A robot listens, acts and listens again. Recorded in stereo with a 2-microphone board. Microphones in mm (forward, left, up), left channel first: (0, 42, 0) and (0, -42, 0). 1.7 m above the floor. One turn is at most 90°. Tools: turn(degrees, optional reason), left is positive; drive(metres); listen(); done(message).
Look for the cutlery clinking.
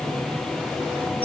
listen()
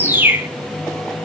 listen()
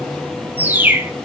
done("I can't make out cutlery clinking, only a bird.")